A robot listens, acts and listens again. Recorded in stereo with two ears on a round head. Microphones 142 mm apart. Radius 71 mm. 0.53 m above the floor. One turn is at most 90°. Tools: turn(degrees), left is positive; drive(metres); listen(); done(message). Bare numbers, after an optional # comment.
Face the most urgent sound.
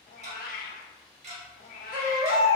# The baby crying: about 35° right or 145° right.
turn(-35)
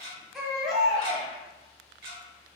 done("Found it: a baby crying, straight ahead.")